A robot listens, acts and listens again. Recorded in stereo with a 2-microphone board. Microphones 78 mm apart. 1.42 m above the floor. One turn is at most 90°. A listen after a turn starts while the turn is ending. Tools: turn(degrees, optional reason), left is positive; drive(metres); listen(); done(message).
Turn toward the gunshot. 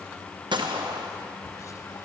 turn(degrees=-90)
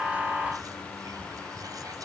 done("Facing where the gunshot came from. I can't hear it now.")